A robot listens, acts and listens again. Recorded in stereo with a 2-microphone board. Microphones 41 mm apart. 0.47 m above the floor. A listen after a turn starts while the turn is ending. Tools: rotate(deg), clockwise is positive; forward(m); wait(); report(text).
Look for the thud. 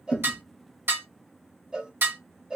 rotate(-50)
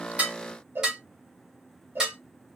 wait()
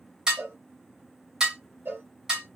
report("I heard a thud, but can't make it out now. It was about straight ahead or 80° left.")